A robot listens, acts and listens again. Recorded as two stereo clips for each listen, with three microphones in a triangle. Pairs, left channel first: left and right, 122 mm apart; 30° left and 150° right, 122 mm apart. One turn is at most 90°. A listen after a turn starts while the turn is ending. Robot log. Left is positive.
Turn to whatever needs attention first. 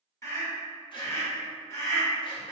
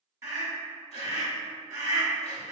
note: The scream: 150° left.
cmd yaw +90
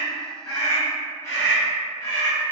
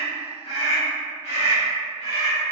note: The scream is now 30° left.
cmd yaw +30
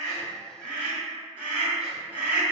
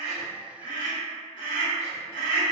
note: The scream is now 15° right.
cmd yaw -15
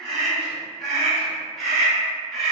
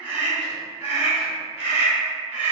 end: Facing the scream.